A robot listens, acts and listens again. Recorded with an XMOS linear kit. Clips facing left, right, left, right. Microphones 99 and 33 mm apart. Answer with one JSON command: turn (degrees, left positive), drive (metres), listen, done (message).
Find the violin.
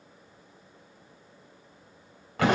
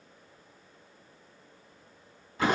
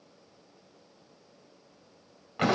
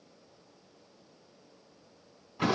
{"listen": true}
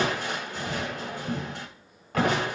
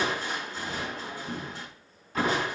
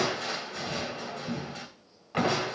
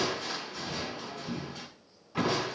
{"listen": true}
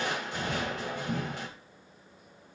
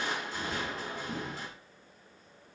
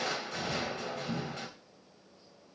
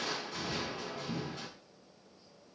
{"done": "I can't make out a violin, only crushing."}